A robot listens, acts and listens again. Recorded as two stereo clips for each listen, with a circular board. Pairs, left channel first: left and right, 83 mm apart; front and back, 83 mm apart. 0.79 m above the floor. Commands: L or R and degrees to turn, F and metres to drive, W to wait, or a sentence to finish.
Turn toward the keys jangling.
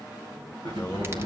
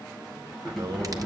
R90
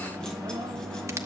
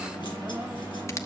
W
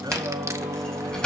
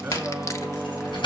L10
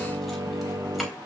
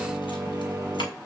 W
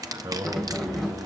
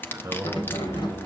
Facing the keys jangling.